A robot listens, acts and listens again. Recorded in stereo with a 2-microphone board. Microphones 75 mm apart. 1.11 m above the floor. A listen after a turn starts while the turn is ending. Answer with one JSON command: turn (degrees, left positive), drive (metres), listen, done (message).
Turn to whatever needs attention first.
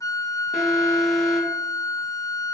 {"turn": 30}
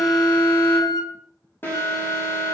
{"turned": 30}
{"turn": 145}
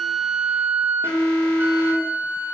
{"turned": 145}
{"turn": 25}
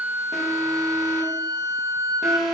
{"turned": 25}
{"turn": -10}
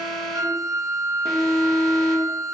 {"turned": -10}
{"done": "Facing the alarm, 2 to 4 m away."}